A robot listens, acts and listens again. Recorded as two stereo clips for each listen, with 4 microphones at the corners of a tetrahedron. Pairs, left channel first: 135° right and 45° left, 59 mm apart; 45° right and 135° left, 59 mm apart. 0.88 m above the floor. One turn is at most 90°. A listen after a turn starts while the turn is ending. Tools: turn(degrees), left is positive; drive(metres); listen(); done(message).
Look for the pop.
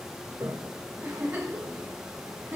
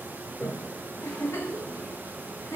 listen()
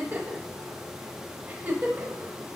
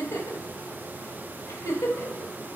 listen()
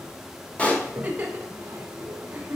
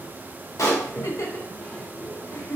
turn(degrees=-65)
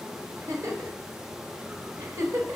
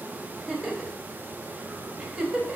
done("I heard a pop from this way, but can't make it out now.")